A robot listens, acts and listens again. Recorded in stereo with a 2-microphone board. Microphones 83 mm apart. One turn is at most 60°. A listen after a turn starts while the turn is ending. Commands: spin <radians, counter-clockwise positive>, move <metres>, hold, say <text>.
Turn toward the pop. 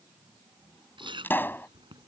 spin 0.44
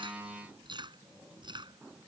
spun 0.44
hold
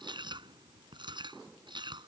say I heard a pop, but can't make it out now. It was about straight ahead or 130° left.